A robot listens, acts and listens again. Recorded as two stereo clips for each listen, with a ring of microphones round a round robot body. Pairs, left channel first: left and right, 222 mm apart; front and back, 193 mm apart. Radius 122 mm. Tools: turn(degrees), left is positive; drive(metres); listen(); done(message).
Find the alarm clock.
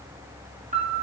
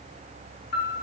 listen()
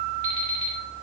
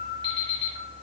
turn(degrees=-70)
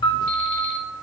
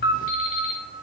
listen()
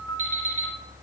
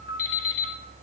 turn(degrees=-15)
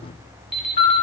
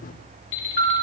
done("Found it: an alarm clock, straight ahead.")